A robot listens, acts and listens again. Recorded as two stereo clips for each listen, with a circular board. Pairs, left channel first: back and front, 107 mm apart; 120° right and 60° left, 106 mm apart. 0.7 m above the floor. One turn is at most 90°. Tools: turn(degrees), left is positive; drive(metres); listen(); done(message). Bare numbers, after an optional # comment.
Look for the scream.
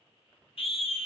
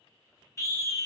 # The scream: 175° right.
turn(-90)
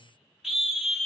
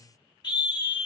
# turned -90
# The scream is now 85° right.
turn(-85)
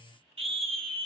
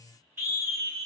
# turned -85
done("Facing the scream, 1 to 2 m away.")